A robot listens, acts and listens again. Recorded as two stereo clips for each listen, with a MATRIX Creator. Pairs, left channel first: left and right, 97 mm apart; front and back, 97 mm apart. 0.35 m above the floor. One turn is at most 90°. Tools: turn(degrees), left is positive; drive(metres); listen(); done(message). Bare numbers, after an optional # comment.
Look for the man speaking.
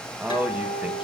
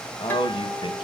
# The man speaking: 20° right.
turn(-20)
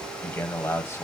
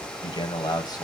# The man speaking is now 35° left.
turn(35)
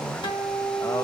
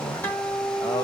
# The man speaking is now 40° left.
turn(40)
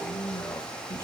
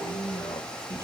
# The man speaking is now 25° left.
turn(25)
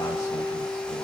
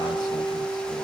listen()
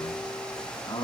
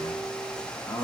# The man speaking is now 50° left.
turn(50)
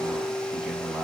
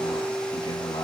# The man speaking is now 10° right.
turn(-10)
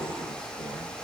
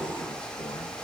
listen()
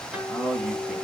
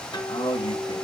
done("Found it: a man speaking, straight ahead, 2 to 4 m away.")